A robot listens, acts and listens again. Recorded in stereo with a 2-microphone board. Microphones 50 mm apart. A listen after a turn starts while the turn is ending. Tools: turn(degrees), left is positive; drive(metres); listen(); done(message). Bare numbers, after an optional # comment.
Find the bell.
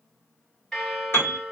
turn(30)
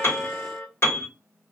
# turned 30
# So it is at 135° left.
turn(135)
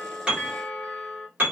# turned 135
done("Found it: a bell, straight ahead.")